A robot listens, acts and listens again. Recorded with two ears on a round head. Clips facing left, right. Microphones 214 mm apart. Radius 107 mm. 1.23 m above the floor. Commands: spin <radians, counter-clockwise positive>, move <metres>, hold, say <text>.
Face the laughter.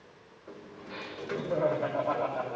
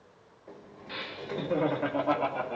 spin -0.87
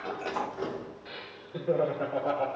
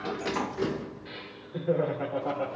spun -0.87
say Facing the laughter, 2 to 4 m away.